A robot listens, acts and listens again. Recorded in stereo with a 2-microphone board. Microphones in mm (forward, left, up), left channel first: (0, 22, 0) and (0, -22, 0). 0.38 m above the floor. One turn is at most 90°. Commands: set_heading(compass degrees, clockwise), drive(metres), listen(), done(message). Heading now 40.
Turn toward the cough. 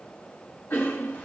set_heading(330)
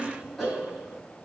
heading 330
done("Facing the cough.")